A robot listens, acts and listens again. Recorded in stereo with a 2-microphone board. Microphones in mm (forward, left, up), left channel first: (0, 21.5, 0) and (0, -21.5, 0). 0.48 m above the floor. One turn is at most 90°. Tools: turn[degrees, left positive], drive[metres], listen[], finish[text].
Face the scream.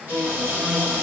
Action: listen[]
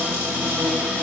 Action: listen[]
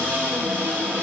Action: finish[I can't make out a scream, only a cupboard door.]